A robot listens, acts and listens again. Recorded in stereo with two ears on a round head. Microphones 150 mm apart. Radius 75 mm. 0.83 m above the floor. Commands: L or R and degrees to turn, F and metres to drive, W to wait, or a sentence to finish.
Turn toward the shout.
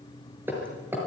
W
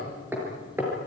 W
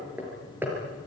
I can't make out a shout to turn to.